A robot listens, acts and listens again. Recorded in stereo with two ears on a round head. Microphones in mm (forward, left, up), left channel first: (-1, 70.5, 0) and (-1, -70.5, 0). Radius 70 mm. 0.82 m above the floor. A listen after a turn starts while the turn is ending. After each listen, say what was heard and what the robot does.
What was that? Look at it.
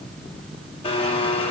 The blender: about 35° left or 145° left. Turn 35° left.
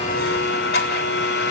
So it is at 110° left. Turn 110° left.
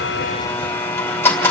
The blender is now 15° left. Turn 15° left.
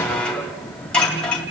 Facing the blender, 2 to 4 m away.